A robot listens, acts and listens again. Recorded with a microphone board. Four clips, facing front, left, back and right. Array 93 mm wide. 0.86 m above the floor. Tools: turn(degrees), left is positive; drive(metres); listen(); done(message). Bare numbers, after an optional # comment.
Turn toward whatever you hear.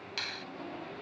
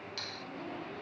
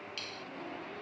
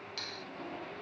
done("Facing the finger snap.")